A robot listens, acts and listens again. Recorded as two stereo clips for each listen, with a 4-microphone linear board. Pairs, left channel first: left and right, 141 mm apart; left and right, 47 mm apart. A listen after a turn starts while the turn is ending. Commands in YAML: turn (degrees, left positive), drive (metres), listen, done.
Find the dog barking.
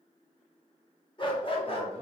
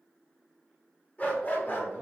turn: 45
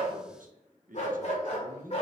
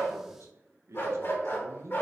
turn: 45
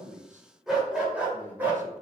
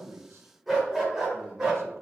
turn: -15
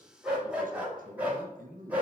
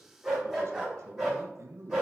turn: -10
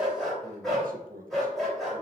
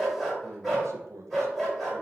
done: "Facing the dog barking."